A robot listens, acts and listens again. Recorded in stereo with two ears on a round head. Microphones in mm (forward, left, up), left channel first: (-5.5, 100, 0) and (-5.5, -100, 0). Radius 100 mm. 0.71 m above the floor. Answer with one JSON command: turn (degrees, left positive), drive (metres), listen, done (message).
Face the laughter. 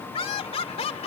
{"turn": 30}
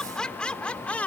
{"done": "Facing the laughter."}